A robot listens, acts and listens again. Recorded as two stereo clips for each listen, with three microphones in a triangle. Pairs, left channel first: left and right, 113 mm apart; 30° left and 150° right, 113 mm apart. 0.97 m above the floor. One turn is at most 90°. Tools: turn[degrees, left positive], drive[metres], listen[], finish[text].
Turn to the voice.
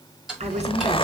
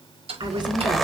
Thought: The woman speaking: 105° right.
Action: turn[-90]
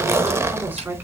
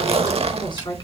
Thought: The woman speaking is now 15° right.
Action: turn[-15]
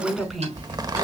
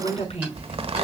Action: finish[Facing the woman speaking.]